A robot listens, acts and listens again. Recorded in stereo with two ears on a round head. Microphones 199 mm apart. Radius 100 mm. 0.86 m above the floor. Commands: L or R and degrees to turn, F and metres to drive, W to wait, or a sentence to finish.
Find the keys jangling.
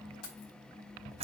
L70
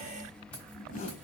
W
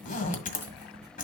W
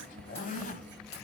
I heard keys jangling, but can't make it out now. It was about straight ahead or 40° left.